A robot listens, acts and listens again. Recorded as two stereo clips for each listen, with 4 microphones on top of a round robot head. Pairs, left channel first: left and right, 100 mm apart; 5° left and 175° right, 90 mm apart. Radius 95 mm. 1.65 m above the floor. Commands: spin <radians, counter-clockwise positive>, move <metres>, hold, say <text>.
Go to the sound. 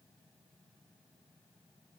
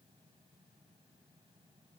hold
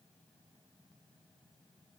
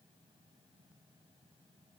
hold
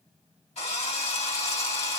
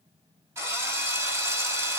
spin 2.27
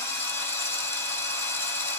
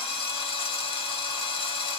spin 0.44
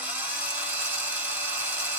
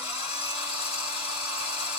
spin -0.35
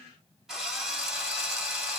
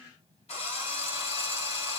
move 1.0
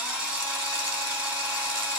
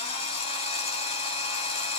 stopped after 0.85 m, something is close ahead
spin -0.17
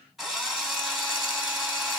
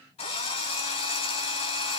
say Arrived at the drill, straight ahead.